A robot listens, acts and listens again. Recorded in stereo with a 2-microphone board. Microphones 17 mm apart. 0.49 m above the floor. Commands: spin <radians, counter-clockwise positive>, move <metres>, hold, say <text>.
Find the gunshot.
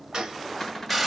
spin -0.87
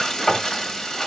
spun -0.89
hold
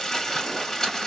say I heard a gunshot, but can't make it out now. It was about 5° left or 80° right.